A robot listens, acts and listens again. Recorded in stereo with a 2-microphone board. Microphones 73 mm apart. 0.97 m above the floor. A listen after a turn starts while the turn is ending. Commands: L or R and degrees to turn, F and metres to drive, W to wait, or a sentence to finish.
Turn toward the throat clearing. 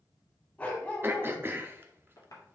R30
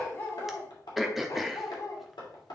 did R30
Found it: throat clearing, straight ahead.